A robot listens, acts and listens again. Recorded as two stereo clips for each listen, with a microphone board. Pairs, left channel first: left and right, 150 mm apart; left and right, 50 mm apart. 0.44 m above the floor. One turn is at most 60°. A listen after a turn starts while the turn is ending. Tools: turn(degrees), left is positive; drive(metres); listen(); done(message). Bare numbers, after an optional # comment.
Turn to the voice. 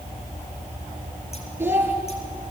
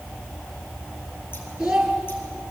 turn(-30)
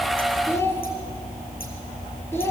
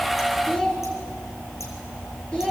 # So it is at 15° left.
turn(15)
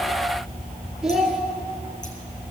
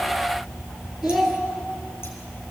done("Found it: a child speaking, straight ahead.")